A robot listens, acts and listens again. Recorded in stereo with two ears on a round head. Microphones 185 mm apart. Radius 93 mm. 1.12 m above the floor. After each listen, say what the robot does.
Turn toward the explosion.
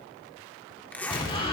Turn 25° left.
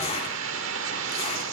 Keep listening.
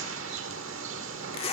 I heard an explosion, but can't make it out now. It was about straight ahead or 130° left.